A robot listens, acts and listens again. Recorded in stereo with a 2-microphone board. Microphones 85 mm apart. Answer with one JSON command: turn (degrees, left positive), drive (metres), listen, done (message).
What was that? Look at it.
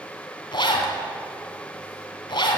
{"turn": 65}
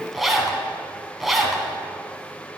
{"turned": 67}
{"done": "Found it: a zipper, straight ahead."}